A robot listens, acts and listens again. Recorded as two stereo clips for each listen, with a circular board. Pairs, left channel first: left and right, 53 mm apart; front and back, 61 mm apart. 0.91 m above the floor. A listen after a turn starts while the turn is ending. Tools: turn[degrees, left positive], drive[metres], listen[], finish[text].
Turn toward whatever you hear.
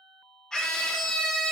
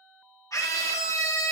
Thought: The scream: 15° left.
Action: turn[15]
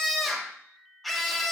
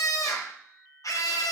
Action: finish[Facing the scream.]